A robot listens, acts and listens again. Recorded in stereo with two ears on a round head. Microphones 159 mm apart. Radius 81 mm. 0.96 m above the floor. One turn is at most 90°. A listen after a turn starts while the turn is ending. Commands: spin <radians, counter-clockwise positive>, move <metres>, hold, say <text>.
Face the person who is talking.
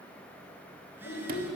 spin 1.05
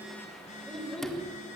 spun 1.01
say Facing the child speaking, 2 to 4 m away.